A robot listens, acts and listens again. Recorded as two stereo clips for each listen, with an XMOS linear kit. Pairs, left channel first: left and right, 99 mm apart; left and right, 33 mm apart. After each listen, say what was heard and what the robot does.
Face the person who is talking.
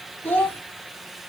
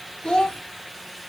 The child speaking: about 20° left or 160° left. Turn 20° left.
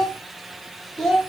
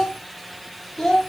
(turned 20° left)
Found it: a child speaking, straight ahead.